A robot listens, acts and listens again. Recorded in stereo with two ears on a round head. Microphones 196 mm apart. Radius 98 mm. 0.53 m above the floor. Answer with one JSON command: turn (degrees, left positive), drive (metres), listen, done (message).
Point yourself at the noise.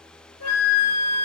{"turn": 75}
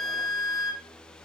{"done": "Facing the flute."}